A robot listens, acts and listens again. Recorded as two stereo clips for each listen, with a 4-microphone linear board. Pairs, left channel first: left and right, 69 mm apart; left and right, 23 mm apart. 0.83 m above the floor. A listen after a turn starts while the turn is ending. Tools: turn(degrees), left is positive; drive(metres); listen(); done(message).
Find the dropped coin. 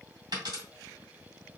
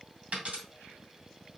turn(degrees=-90)
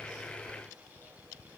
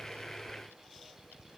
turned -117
turn(degrees=25)
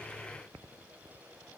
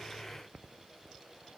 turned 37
turn(degrees=-10)
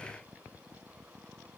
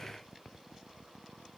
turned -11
done("Facing where the dropped coin came from. I can't hear it now.")